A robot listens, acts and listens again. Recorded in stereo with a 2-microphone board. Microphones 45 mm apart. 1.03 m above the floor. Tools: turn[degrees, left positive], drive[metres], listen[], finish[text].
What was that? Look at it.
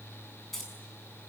Action: turn[30]
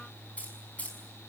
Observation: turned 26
Thought: So it is at 150° left.
Action: turn[150]
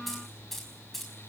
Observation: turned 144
Action: finish[Facing the keys jangling, over 4 m away.]